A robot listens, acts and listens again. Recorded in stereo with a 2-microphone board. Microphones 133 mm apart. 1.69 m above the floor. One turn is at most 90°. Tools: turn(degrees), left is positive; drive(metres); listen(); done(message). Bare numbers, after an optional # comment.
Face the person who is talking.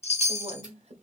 # The woman speaking: about 55° right or 125° right.
turn(-55)
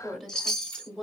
done("Found it: a woman speaking, straight ahead.")